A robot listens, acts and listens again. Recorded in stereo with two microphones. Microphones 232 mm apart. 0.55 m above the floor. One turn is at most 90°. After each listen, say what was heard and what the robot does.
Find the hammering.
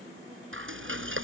Keep listening.
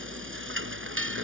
Keep listening.
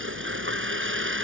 I can't make out hammering to turn to.